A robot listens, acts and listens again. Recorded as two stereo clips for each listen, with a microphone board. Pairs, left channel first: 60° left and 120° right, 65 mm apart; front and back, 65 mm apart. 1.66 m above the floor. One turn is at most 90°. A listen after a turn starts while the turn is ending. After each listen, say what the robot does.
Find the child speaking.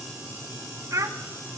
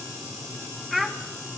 Turn 90° right.
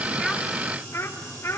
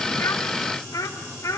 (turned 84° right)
Turn 20° left.
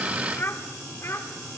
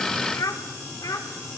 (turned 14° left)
Turn 15° left.
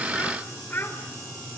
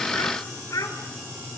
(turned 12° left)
Found it: a child speaking, straight ahead.